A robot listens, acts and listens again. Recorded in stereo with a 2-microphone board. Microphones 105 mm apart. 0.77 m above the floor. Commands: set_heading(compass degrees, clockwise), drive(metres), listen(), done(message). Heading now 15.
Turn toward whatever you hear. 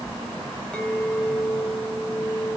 set_heading(345)
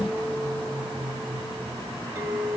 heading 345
set_heading(5)
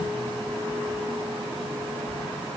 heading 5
listen()
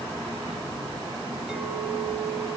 listen()
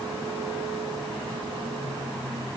done("Facing where the clink came from. I can't hear it now.")